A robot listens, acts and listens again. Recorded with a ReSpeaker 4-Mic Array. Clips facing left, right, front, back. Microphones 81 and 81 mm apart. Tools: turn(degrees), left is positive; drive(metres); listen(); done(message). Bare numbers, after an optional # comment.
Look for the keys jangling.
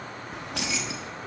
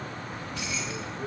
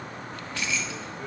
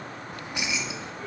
# The keys jangling: 105° left.
turn(105)
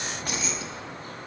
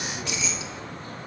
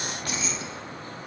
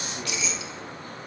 # The keys jangling is now 45° left.
turn(45)
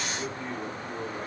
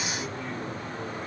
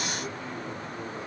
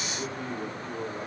listen()
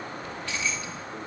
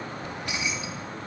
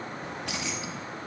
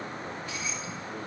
# The keys jangling is now 15° right.
turn(-15)
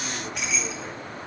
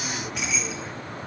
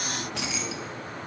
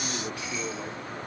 done("Facing the keys jangling, under 1 m away.")